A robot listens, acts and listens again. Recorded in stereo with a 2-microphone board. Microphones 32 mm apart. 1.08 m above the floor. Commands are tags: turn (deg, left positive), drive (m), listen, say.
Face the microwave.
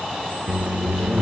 <turn deg="-50"/>
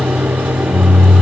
<turn deg="-85"/>
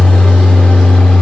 <turn deg="40"/>
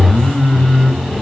<say>Found it: a microwave, straight ahead.</say>